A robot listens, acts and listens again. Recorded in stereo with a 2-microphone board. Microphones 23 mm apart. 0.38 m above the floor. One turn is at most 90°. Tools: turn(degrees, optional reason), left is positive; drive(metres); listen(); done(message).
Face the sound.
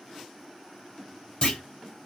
turn(degrees=40, reason="The clunk: about 40° left or 140° left.")
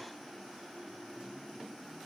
listen()
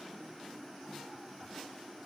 done("I heard a clunk, but can't make it out now. It was about straight ahead or 100° left.")